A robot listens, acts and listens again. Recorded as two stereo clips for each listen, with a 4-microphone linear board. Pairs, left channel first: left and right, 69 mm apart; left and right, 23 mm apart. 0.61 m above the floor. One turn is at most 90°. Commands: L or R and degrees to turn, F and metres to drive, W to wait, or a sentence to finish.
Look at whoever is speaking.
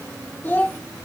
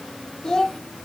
L30
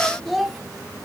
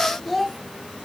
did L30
Found it: a child speaking, straight ahead, 1 to 2 m away.